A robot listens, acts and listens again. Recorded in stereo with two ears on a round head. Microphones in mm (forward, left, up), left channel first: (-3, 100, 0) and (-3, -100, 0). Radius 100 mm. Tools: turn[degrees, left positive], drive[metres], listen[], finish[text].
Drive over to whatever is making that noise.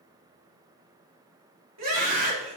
Action: turn[-90]
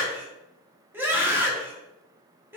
Thought: So it is at 10° right.
Action: turn[-10]
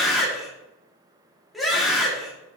Action: drive[1.0]
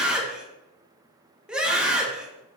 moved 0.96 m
Action: drive[1.0]
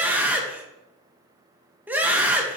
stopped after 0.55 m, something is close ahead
Thought: The scream is now 10° right.
Action: turn[-10]
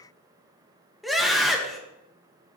Action: finish[Arrived at the scream, straight ahead.]